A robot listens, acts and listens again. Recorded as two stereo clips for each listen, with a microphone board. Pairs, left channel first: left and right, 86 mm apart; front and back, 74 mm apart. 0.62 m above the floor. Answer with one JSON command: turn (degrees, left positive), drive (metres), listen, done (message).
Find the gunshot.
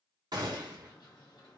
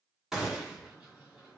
{"turn": -100}
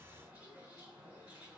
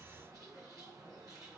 {"done": "Facing where the gunshot came from. I can't hear it now."}